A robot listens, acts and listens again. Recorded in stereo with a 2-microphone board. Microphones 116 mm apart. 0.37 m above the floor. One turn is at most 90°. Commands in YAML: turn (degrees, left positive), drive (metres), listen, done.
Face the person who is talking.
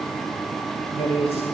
turn: 60
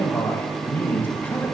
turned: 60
turn: 20
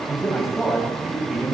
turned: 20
done: "Found it: a man speaking, straight ahead."